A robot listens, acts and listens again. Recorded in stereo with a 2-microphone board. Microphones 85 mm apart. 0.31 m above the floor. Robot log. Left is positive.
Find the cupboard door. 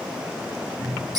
note: The cupboard door: about 55° left or 125° left.
cmd yaw +55
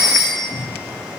note: So it is at 70° left.
cmd yaw +70
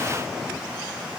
cmd idle
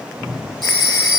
end: Found it: a cupboard door, straight ahead.